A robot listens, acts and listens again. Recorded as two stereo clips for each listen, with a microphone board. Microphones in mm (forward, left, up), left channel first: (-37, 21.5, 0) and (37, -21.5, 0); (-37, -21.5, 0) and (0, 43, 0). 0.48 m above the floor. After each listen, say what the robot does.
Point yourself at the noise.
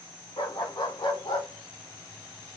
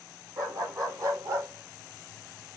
Turn 105° left.
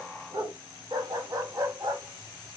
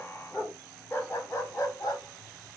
Turn 75° right.
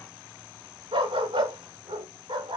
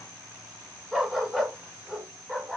Turn 20° right.
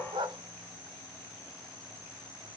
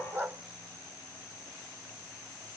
Facing the dog barking, 1 to 2 m away.